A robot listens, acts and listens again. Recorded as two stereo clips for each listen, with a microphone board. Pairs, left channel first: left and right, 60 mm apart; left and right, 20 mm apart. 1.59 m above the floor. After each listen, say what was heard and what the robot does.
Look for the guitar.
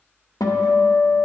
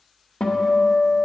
The guitar: about 70° left or 110° left. Turn 70° left.
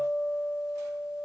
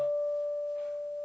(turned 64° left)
Facing the guitar.